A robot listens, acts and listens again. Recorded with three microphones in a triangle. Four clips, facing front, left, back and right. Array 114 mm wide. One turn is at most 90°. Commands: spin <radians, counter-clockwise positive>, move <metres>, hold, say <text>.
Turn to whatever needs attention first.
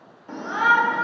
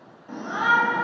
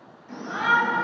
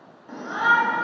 say Facing the shout, 1 to 2 m away.